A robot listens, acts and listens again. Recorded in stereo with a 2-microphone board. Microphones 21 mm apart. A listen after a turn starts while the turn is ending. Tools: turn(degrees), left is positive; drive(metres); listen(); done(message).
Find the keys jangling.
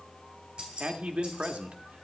turn(degrees=-45)
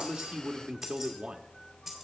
done("Found it: keys jangling, straight ahead, 2 to 4 m away.")